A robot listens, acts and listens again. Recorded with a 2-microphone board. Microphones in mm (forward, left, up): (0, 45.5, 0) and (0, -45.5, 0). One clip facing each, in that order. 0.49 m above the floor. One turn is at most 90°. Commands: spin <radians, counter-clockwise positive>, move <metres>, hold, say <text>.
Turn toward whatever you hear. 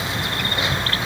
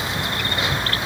hold
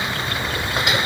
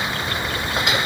hold
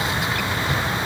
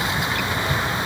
say I can't make out anything.